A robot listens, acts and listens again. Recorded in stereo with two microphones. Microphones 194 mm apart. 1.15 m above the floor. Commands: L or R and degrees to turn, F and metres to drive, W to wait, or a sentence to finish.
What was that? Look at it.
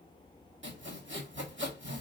R70
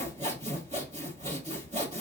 R35
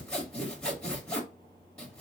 Found it: sawing, straight ahead, 1 to 2 m away.